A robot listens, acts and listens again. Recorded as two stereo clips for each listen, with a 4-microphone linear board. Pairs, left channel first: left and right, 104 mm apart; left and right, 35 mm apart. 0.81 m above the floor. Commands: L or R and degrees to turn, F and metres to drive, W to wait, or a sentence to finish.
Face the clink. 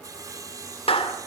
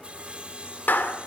W
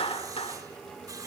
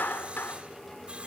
W
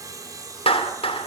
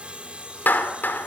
I can't make out a clink to turn to.